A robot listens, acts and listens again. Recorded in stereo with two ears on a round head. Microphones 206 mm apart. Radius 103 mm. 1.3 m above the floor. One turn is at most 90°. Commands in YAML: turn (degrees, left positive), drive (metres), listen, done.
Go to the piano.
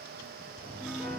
turn: 30
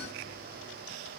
listen: true
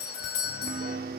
turn: -35
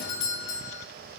listen: true
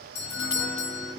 drive: 1.0
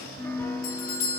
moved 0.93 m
turn: 10
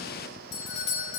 listen: true
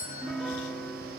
drive: 1.0
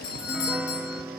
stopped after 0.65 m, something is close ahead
done: "Arrived at the piano, straight ahead."